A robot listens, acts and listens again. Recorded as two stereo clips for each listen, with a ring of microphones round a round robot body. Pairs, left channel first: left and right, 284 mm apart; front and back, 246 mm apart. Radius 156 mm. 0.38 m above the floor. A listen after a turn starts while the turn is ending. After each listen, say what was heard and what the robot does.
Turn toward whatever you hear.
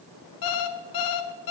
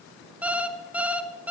The alarm clock: 95° left. Turn 95° left.
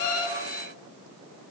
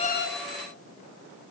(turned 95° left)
Keep listening.
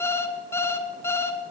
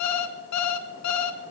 The alarm clock is now 10° left. Turn 10° left.
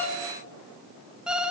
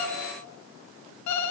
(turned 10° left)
Facing the alarm clock.